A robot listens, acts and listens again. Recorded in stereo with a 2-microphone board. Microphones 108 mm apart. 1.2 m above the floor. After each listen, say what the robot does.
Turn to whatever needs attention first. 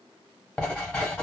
Keep listening.
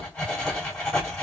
Keep listening.
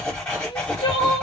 Turn 50° left.
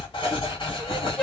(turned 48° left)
Keep listening.
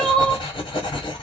Turn 10° left.
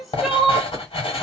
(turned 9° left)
Found it: crying, straight ahead, under 1 m away.